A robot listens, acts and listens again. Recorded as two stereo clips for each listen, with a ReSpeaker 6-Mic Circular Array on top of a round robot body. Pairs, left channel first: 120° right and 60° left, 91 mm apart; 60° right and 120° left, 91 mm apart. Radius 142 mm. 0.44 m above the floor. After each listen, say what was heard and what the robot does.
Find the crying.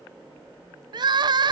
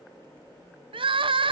The crying: 100° left. Turn 100° left.
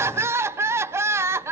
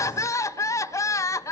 Facing the crying, 1 to 2 m away.